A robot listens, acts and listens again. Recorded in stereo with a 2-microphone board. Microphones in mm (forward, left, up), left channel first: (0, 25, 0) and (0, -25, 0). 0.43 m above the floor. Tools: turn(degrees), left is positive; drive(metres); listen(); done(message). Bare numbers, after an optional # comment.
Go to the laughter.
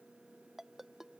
listen()
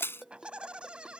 # The laughter: about 25° right or 155° right.
turn(-25)
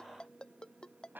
# So it is at 135° right.
turn(-135)
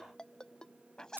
# The laughter is now 15° left.
turn(15)
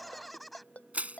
drive(1.0)
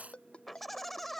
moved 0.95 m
drive(1.0)
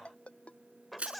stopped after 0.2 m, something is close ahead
done("Arrived at the laughter, straight ahead.")